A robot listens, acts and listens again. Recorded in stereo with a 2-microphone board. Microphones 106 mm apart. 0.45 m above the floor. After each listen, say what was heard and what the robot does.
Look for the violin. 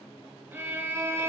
The violin: about 20° right or 160° right. Turn 20° right.
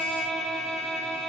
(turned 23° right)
Found it: a violin, straight ahead.